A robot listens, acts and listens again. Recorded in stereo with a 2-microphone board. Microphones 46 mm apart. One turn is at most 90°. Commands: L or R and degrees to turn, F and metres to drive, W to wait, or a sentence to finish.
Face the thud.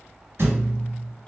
R55
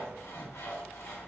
W
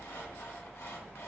I heard a thud, but can't make it out now. It was about straight ahead or 70° right.